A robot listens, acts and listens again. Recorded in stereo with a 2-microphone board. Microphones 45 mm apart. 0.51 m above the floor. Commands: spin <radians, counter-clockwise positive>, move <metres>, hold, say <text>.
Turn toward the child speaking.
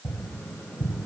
hold
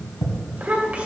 spin -0.52
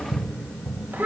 spin -2.27
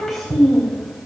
say Facing the child speaking, 2 to 4 m away.